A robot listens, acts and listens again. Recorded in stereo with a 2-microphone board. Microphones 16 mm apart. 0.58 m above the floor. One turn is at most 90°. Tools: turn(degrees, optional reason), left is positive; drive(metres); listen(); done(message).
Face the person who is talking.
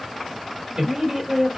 turn(degrees=-55, reason="The woman speaking: about 55° right or 125° right.")
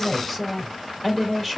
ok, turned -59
done("Found it: a woman speaking, straight ahead.")